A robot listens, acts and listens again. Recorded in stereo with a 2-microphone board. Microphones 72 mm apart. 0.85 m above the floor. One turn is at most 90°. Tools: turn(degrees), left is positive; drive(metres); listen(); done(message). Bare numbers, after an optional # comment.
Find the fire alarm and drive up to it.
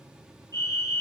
# The fire alarm: about 45° left or 135° left.
turn(45)
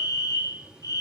# So it is at 80° left.
turn(80)
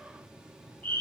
# The fire alarm is now 25° left.
turn(25)
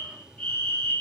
# The fire alarm is now 15° left.
turn(15)
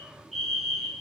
drive(1.0)
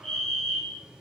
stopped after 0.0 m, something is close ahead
# The fire alarm is now 10° left.
turn(10)
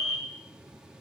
done("Something is in my way. I am facing the fire alarm but have not reached it.")